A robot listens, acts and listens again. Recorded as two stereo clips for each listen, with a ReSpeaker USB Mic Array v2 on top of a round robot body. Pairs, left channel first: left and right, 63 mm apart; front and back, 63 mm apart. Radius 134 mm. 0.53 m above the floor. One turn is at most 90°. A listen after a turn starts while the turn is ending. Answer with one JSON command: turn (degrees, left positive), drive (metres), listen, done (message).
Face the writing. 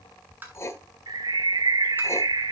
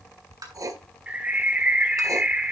{"turn": 90}
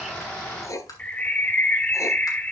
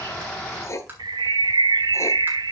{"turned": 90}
{"turn": 50}
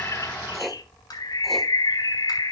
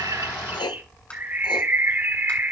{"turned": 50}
{"done": "Found it: writing, straight ahead."}